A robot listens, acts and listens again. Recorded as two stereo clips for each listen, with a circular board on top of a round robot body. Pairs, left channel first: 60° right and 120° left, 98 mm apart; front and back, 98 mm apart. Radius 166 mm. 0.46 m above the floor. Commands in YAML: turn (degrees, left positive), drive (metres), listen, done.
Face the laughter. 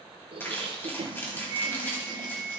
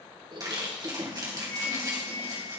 turn: 150
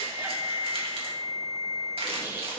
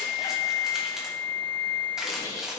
listen: true
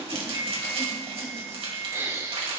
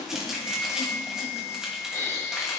turn: 60
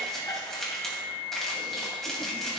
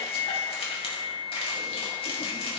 listen: true
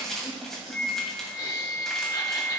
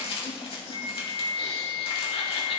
listen: true
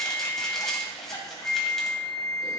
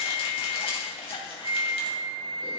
done: "Facing where the laughter came from. I can't hear it now."